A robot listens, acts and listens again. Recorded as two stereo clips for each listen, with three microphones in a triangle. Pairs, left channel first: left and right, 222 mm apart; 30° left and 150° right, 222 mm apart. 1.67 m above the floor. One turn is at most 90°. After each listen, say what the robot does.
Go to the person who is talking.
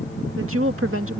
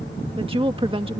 Turn 85° right.
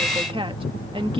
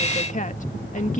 Turn 25° right.
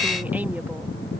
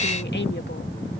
Keep listening.
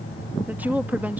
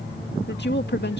Turn 10° right.
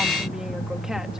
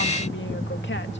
Keep listening.
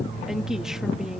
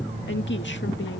Drive 1.0 m forward.
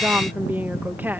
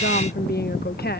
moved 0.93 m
Turn 10° right.
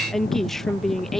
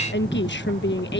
Drive 1.0 m forward.
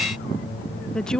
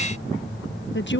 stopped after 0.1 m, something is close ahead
Arrived at the woman speaking, straight ahead.